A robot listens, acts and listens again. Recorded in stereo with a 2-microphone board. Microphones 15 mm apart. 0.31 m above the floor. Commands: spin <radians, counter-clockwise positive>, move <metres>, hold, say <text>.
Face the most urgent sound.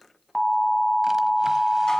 spin 0.44
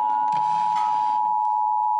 say Facing the alarm.